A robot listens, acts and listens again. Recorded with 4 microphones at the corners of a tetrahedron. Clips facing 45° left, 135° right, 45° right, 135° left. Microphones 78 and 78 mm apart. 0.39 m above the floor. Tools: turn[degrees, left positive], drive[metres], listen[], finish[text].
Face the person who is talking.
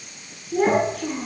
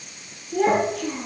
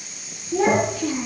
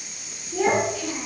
Thought: The child speaking: 10° right.
Action: turn[-10]
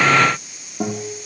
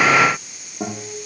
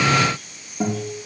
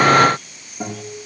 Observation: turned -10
Action: listen[]
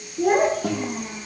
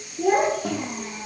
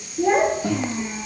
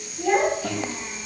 Action: finish[Found it: a child speaking, straight ahead.]